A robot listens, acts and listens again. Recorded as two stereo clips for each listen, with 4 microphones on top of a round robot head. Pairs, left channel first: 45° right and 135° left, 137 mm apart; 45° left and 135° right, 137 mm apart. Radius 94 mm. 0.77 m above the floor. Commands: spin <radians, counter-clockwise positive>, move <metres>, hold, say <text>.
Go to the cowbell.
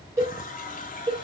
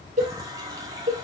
spin -2.79
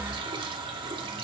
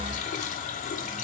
hold
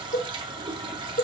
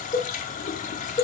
spin -0.35
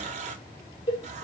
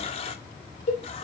move 1.0
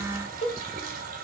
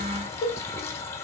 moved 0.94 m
move 1.0
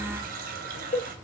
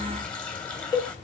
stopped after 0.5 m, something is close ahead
spin -0.17
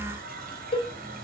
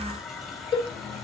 say I am next to the cowbell.